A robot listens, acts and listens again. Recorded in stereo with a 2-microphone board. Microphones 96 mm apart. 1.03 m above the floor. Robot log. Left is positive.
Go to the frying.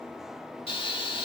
note: The frying: about 75° left or 105° left.
cmd yaw +75
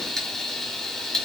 cmd fwd 1.0
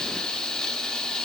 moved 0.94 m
note: The frying is now 10° left.
cmd yaw +10
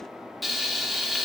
cmd fwd 1.0
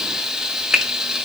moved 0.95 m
cmd fwd 1.0
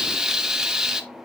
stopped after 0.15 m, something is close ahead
end: I am next to the frying.